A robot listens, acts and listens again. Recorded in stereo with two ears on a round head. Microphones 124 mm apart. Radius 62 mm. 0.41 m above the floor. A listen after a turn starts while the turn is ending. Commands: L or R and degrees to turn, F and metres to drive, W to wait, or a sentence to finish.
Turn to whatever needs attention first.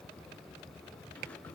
W
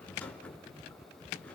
W
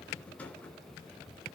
I can't make out anything urgent, only a rattle.